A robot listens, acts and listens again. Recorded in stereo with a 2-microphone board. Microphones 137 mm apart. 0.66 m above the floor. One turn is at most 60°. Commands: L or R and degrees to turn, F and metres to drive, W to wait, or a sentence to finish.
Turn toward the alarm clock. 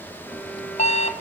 L50
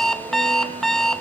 Facing the alarm clock, 1 to 2 m away.